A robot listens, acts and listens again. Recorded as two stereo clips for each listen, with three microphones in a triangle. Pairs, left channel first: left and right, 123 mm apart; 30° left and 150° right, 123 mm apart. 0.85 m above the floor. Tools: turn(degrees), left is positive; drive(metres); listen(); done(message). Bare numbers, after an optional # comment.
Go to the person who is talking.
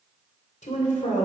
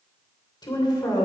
# The woman speaking: 85° left.
turn(85)
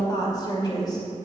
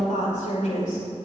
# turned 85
# The woman speaking is now 35° left.
turn(35)
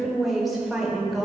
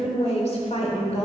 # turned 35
drive(1.0)
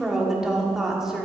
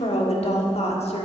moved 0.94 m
drive(1.0)
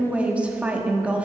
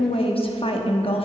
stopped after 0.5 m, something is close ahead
# The woman speaking is now 10° right.
turn(-10)
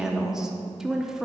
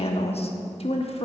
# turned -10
done("I am next to the woman speaking.")